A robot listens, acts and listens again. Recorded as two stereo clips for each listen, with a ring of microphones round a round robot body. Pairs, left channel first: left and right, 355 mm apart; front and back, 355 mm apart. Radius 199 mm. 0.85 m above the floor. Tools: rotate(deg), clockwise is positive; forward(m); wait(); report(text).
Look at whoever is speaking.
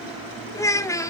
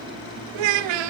rotate(-170)
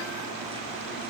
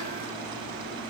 wait()
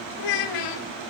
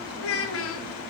rotate(-55)
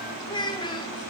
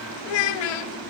rotate(-10)
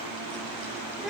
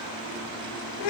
report("Found it: a child speaking, straight ahead.")